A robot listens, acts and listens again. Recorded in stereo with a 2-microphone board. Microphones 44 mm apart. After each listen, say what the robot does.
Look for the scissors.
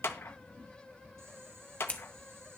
Turn 30° left.
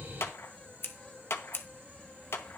Turn 120° left.
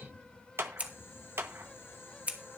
Turn 30° right.
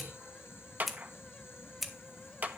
Facing the scissors.